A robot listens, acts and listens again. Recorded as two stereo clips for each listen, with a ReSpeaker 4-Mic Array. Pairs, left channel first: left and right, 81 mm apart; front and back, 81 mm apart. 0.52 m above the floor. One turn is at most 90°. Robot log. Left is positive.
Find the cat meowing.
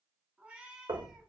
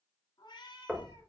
note: The cat meowing: 10° right.
cmd yaw -10
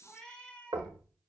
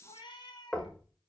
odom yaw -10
note: The cat meowing is now 15° left.
cmd yaw +15
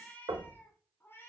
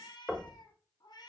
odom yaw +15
note: The cat meowing is now 30° left.
cmd yaw +30
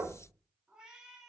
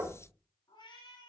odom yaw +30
end: Facing the cat meowing, 1 to 2 m away.